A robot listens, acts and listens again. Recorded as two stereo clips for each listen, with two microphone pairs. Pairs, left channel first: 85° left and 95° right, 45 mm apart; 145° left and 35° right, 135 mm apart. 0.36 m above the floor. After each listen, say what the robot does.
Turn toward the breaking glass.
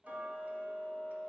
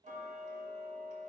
Keep listening.
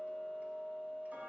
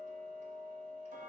Keep listening.
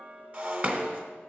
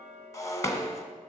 Turn 150° right.
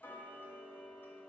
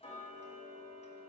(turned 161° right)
Turn 10° left.
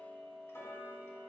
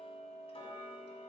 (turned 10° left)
Facing where the breaking glass came from. I can't hear it now.